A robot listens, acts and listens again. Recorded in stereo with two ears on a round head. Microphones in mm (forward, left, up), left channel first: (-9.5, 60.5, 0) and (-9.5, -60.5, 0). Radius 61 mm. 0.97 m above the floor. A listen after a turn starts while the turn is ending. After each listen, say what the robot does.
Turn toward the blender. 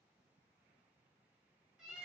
Keep listening.
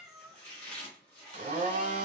Turn 60° right.
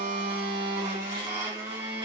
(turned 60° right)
Turn 40° right.
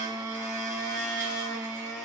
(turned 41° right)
Found it: a blender, straight ahead, 1 to 2 m away.